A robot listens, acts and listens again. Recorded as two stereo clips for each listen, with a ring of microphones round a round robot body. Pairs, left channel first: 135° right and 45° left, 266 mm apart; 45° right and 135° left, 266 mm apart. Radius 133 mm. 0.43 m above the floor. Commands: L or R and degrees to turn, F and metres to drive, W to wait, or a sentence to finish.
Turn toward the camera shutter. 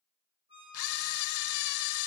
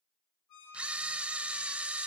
R140
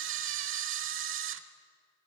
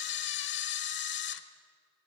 Facing the camera shutter.